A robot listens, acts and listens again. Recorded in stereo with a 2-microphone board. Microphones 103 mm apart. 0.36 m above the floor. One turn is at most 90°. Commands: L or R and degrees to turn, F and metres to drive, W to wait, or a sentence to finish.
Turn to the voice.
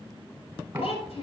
L75
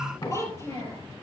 L30
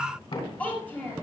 L15
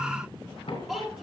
Facing the child speaking, over 4 m away.